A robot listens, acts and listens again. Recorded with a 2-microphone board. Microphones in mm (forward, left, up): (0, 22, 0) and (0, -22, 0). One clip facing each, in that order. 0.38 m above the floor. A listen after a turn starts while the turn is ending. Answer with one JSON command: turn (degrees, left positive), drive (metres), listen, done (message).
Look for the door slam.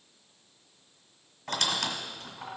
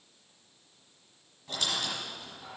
{"listen": true}
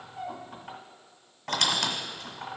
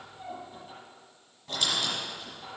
{"listen": true}
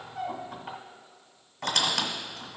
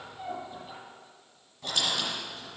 {"done": "I can't make out a door slam, only a squeak."}